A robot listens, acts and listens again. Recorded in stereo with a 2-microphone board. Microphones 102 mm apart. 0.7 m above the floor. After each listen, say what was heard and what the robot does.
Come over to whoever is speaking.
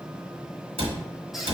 Keep listening.
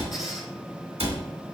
Keep listening.
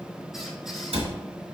I can't make out anyone speaking, only a cupboard door and a squeak.